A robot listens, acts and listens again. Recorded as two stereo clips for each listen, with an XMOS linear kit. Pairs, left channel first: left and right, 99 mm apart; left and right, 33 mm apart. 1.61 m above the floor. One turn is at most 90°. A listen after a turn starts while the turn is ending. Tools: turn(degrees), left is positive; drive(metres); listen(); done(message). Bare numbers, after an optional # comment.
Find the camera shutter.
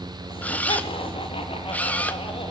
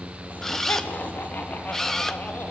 # The camera shutter: about 15° left or 165° left.
turn(15)
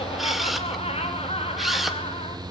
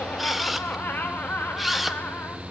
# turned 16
done("Found it: a camera shutter, straight ahead, 1 to 2 m away.")